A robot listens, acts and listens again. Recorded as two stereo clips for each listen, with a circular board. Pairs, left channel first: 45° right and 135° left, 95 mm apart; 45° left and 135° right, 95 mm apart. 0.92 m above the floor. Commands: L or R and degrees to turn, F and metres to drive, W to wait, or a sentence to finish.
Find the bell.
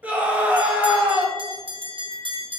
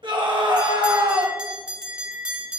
L145
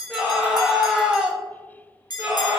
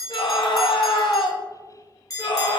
Facing the bell, under 1 m away.